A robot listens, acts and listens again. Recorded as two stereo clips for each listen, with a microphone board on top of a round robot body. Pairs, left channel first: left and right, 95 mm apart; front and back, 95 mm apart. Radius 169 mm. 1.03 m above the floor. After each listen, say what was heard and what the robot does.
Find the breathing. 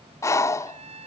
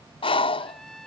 The breathing: 30° left. Turn 30° left.
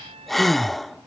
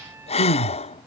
Facing the breathing.